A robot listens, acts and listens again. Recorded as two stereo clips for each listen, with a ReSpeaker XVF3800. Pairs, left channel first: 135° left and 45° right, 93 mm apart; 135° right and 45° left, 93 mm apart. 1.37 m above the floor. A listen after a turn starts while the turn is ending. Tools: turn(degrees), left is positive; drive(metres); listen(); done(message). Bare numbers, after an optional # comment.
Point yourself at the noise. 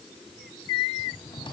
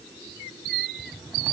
# The cupboard door: 110° left.
turn(110)
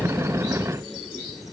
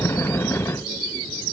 listen()
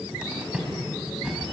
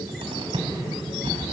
# The cupboard door is now 35° left.
turn(35)
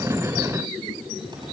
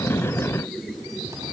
# The cupboard door is now 10° right.
turn(-10)
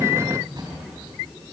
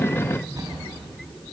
done("Found it: a cupboard door, straight ahead, over 4 m away.")